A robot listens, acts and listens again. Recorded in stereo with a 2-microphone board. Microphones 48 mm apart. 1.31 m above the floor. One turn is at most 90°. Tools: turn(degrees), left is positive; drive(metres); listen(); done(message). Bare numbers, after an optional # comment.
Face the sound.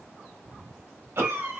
# The cough: about 60° right or 120° right.
turn(-60)
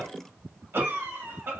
# So it is at 55° right.
turn(-55)
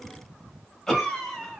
done("Facing the cough.")